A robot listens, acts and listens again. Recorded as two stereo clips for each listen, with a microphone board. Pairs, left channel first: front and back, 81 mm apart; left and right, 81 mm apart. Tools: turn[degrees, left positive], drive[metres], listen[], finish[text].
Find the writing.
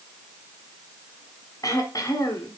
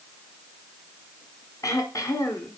Action: listen[]
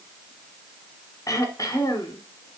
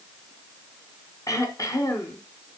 Action: listen[]
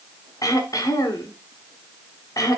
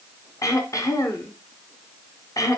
Action: finish[I can't make out writing, only throat clearing.]